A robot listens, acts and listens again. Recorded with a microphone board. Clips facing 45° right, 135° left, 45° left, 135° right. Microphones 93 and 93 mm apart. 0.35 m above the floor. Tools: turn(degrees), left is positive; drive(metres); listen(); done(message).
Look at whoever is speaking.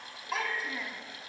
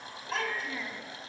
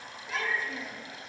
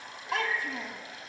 turn(degrees=-130)
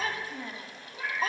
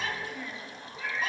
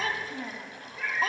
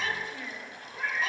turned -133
done("Facing the child speaking, 1 to 2 m away.")